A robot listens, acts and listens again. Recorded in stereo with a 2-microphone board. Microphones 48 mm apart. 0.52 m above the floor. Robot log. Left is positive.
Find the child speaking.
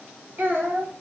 note: The child speaking: about 60° right or 120° right.
cmd yaw -60
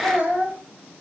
note: So it is at 40° right.
cmd yaw -40
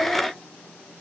cmd idle
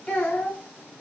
note: The child speaking is now 25° left.
cmd yaw +25
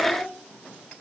cmd idle
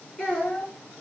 note: The child speaking is now 20° left.
cmd yaw +20
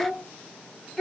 end: Found it: a child speaking, straight ahead.